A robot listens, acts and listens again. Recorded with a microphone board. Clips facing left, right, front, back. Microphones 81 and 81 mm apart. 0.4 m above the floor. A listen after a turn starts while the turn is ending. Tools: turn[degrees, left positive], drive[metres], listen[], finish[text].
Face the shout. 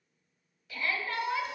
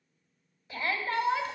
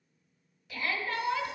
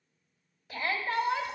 Thought: The shout: 150° right.
Action: turn[-150]
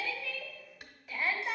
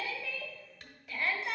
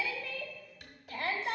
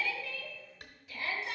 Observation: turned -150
Action: finish[Found it: a shout, straight ahead.]